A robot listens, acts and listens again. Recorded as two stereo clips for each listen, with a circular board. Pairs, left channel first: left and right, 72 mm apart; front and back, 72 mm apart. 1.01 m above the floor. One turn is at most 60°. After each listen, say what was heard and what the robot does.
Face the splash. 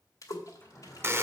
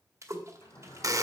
The splash: 130° left. Turn 60° left.
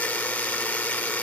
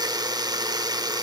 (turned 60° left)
Nothing new. It was at 70° left. Turn 60° left.
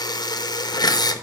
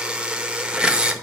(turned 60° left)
Nothing new. It was at 10° left. Turn 10° left.
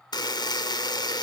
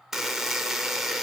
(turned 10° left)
Facing where the splash came from. I can't hear it now.